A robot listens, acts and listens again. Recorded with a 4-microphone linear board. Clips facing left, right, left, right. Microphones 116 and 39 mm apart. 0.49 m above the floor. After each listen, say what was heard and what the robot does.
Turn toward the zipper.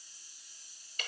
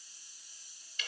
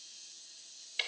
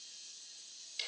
Keep listening.
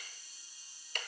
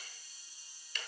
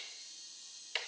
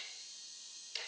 Keep listening.
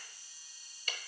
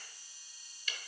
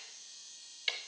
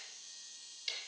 I can't make out a zipper to turn to.